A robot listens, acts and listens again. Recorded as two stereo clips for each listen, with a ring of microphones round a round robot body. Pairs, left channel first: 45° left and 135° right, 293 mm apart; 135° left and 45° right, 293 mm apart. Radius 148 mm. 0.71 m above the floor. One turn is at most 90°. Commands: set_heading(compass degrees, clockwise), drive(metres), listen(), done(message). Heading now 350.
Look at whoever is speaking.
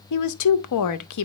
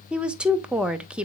set_heading(310)
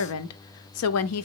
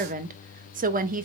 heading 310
set_heading(295)
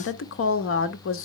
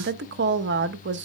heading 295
done("Facing the woman speaking, under 1 m away.")